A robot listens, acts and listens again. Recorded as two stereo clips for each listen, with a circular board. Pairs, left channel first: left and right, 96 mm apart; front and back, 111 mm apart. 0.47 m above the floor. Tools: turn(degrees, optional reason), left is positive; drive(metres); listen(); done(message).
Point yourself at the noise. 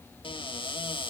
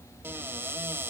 turn(degrees=110, reason="The cupboard door: 110° left.")
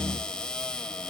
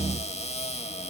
turn(degrees=10, reason="The cupboard door is now 10° left.")
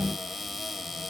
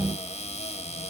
done("Found it: a cupboard door, straight ahead.")